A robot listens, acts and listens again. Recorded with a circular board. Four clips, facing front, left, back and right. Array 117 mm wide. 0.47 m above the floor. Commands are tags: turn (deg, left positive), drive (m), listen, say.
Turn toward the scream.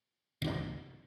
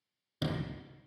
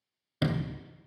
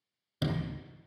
<listen/>
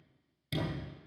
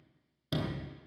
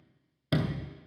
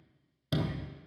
<listen/>
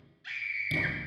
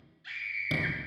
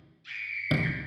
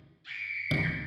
<turn deg="30"/>
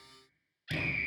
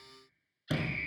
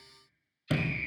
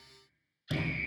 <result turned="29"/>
<say>Found it: a scream, straight ahead, 2 to 4 m away.</say>